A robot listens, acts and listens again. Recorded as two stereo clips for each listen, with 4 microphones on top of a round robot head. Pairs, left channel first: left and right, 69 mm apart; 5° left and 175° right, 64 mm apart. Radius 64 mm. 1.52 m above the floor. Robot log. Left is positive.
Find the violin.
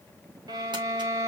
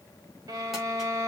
note: The violin: 130° right.
cmd yaw -130
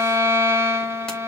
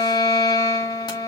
note: The violin is now 35° right.
cmd yaw -35
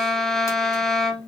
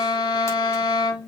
end: Found it: a violin, straight ahead.